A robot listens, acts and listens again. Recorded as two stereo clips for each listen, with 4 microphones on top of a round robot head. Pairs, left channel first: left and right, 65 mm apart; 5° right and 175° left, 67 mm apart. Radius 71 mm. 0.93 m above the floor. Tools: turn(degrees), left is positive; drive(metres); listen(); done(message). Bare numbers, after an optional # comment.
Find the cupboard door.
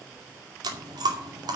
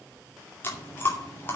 listen()
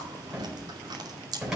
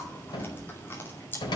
# The cupboard door: 10° right.
turn(-10)
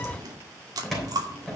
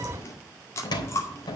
done("Found it: a cupboard door, straight ahead, 2 to 4 m away.")